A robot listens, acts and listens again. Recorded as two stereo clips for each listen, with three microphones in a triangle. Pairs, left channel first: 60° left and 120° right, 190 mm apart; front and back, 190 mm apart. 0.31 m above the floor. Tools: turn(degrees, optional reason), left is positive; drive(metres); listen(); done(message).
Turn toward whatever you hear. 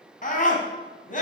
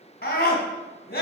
turn(degrees=20, reason="The scream: 20° left.")
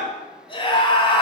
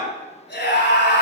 done("Found it: a scream, straight ahead.")